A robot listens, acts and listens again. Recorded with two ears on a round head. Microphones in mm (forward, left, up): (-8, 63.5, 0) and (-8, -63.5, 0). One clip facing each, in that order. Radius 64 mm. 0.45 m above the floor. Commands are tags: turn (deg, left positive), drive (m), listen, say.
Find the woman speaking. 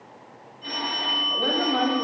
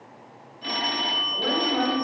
<turn deg="65"/>
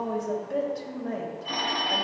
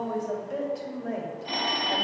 <turn deg="-10"/>
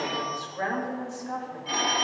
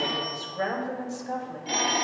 <turn deg="-35"/>
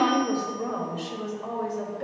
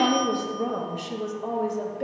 <turn deg="-15"/>
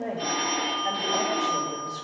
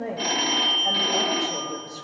<say>Facing the woman speaking, 1 to 2 m away.</say>